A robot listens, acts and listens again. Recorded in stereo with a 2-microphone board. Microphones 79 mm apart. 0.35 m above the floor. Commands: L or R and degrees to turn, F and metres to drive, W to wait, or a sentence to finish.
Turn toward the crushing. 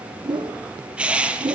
R30
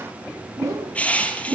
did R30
L20
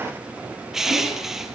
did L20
Found it: crushing, straight ahead, 2 to 4 m away.